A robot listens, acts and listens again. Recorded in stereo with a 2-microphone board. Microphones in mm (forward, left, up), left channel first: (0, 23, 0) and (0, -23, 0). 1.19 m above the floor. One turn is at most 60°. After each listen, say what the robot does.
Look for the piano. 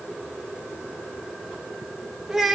Keep listening.
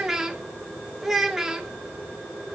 Keep listening.
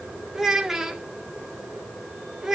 I can't make out a piano, only a child speaking.